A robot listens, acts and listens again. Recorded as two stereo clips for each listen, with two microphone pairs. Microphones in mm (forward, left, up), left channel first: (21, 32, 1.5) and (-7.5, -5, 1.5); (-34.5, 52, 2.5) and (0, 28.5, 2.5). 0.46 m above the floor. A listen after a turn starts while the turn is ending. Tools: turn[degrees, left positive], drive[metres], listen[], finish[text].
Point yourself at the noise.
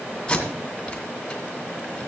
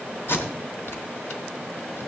Thought: The tape being pulled: 125° left.
Action: turn[125]
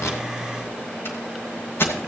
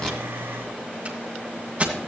Thought: The tape being pulled is now 25° left.
Action: turn[25]
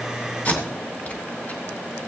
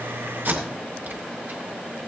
Action: finish[Found it: tape being pulled, straight ahead.]